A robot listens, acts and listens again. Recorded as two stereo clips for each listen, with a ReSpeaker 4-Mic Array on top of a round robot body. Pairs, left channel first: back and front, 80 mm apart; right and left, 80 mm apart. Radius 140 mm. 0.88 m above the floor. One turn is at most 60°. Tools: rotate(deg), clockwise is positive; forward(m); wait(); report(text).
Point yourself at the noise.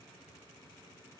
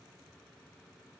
wait()
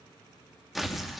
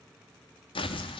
rotate(60)
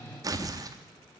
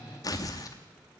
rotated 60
rotate(45)
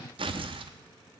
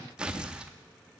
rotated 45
rotate(-10)
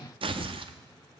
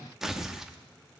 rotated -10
report("Found it: tearing paper, straight ahead, under 1 m away.")